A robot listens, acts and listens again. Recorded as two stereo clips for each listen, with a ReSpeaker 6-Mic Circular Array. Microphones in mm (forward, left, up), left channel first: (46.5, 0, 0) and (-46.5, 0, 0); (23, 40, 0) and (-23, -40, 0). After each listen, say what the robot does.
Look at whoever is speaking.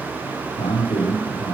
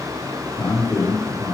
Facing the man speaking.